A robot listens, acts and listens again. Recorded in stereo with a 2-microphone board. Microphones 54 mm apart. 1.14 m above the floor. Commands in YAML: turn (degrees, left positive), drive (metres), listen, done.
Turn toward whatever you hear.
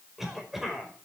turn: -30
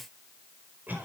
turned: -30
turn: -140
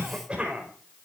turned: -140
turn: -20
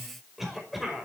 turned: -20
done: "Facing the cough."